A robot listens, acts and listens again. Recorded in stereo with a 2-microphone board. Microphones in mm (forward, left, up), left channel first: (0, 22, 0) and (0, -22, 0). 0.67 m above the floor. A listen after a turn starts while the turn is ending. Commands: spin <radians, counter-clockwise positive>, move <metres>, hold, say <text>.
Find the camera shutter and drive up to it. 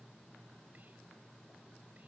hold
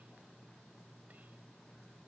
hold
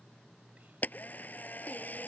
spin 0.70
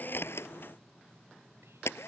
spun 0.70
spin 1.66
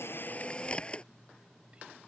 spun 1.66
spin 0.44
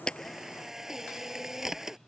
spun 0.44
spin -0.17
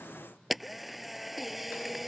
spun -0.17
move 1.0
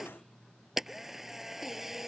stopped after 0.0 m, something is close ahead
say Blocked. The camera shutter is further on, straight ahead.